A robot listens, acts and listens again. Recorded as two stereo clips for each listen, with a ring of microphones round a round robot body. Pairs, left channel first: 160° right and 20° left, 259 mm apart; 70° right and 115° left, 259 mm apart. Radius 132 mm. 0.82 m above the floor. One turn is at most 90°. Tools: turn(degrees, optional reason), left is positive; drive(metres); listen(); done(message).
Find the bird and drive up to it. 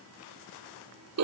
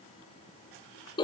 listen()
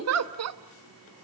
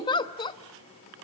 listen()
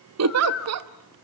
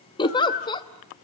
turn(degrees=-90, reason="The bird: 120° right.")
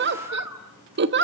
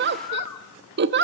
turn(degrees=-60, reason="The bird is now 60° right.")
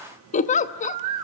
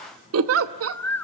turn(degrees=15, reason="The bird is now 15° left.")
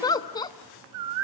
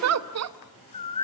drive(metres=1.0)
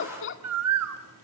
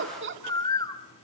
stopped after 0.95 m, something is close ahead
done("I am next to the bird.")